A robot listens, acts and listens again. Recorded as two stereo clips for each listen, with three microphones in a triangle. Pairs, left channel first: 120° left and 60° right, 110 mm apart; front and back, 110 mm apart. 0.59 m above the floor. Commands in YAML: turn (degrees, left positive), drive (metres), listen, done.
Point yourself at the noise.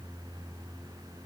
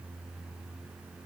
listen: true
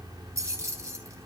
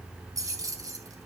turn: -120
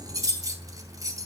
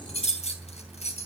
done: "Facing the keys jangling."